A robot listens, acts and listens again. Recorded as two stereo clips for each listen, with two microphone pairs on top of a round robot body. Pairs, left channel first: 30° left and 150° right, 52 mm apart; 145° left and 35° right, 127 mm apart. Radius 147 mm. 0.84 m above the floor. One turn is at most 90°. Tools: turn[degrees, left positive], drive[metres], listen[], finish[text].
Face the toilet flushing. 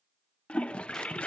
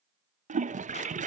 Thought: The toilet flushing: 45° right.
Action: turn[-45]
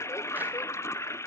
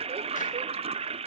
Action: finish[Found it: a toilet flushing, straight ahead, under 1 m away.]